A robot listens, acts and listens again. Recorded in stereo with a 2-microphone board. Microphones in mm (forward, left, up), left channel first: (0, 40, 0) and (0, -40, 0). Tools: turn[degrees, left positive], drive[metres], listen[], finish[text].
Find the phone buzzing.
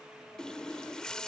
Action: listen[]
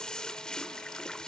Action: listen[]
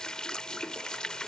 Action: finish[I can't make out a phone buzzing to turn to.]